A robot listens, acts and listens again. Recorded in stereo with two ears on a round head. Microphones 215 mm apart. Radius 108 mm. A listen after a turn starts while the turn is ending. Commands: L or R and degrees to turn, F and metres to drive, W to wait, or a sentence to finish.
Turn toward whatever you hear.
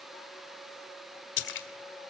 L50
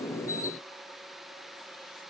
W
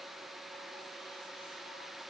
I heard a splash, but can't make it out now. It was about straight ahead or 80° left.